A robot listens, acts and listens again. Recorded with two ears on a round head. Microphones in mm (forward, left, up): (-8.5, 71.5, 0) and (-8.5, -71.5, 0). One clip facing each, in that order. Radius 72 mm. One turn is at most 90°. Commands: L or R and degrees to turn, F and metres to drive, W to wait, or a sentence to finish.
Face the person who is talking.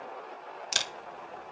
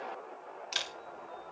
W
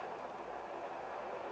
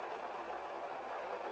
W
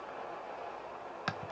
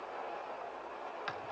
I can't make out anyone speaking to turn to.